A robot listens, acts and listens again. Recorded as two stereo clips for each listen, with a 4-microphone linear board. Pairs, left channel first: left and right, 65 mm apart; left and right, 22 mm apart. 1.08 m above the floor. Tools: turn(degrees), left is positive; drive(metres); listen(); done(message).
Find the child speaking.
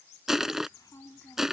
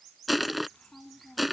turn(degrees=90)
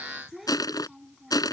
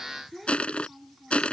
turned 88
done("Facing the child speaking.")